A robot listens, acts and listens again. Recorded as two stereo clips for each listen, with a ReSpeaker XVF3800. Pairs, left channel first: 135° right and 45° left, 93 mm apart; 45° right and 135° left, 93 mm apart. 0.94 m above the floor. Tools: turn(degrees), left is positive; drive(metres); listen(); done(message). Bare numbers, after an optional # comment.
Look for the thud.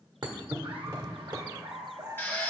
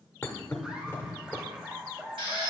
# The thud: 20° left.
turn(20)
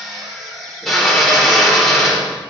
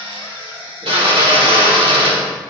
done("Facing where the thud came from. I can't hear it now.")